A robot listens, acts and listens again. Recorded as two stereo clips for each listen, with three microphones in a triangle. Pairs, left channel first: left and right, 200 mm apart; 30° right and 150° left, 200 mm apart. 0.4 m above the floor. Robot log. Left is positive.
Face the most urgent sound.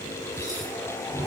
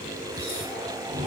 cmd idle
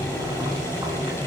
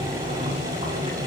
cmd idle
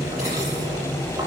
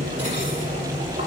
end: I can't make out anything urgent, only boiling.